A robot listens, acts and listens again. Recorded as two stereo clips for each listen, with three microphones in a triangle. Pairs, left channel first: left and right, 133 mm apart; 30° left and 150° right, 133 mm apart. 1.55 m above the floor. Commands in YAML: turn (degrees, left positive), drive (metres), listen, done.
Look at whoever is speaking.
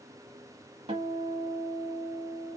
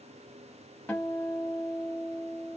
listen: true
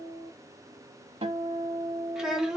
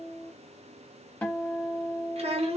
turn: -175
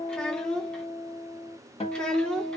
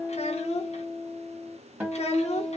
done: "Found it: a child speaking, straight ahead."